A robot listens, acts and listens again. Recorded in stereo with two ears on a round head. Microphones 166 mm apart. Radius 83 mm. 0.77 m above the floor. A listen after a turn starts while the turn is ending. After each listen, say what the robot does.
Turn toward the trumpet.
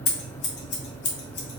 Keep listening.
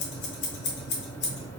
Keep listening.
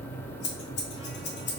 I can't make out a trumpet, only scissors.